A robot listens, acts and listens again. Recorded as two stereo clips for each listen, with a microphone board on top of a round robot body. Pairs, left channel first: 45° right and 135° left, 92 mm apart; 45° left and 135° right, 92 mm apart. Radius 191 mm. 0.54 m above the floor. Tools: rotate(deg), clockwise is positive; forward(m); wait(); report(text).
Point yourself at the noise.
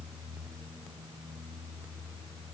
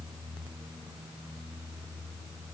wait()
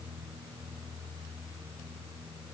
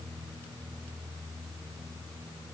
wait()
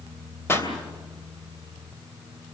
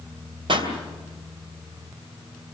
rotate(110)
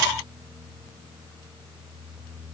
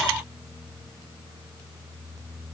report("Facing where the pop came from. I can't hear it now.")